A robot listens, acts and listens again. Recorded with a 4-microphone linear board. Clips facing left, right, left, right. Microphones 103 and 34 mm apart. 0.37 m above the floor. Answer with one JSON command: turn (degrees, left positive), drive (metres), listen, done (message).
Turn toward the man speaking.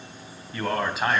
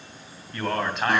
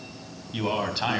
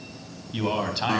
{"turn": 30}
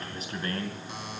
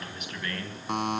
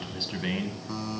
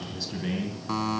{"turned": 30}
{"turn": 145}
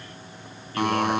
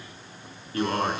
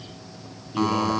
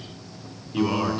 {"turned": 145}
{"listen": true}
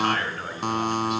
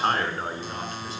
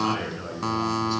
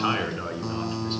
{"turn": -35}
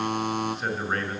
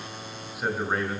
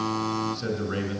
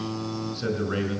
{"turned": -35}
{"turn": -10}
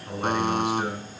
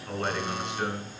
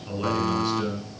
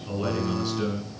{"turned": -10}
{"done": "Facing the man speaking, over 4 m away."}